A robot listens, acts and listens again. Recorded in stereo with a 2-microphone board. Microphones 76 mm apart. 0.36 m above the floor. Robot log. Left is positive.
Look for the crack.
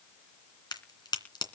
note: The crack: about 65° left or 115° left.
cmd yaw +65
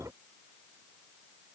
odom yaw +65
cmd idle
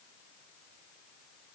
end: I heard a crack, but can't make it out now. It was about straight ahead or 50° left.